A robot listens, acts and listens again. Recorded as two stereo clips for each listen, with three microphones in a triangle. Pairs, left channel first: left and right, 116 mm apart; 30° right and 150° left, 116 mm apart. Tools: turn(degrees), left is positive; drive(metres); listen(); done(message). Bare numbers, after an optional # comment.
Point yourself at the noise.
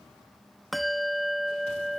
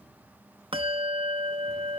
# The bell: straight behind.
turn(180)
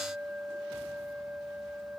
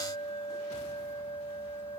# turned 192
# The bell is now 15° right.
turn(-15)
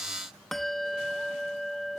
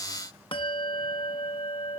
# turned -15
done("Found it: a bell, straight ahead.")